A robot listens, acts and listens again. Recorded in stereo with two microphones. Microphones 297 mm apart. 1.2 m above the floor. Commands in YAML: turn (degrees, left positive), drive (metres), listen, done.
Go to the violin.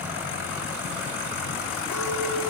listen: true
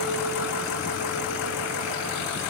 listen: true
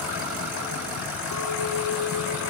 done: "I can't make out a violin to turn to."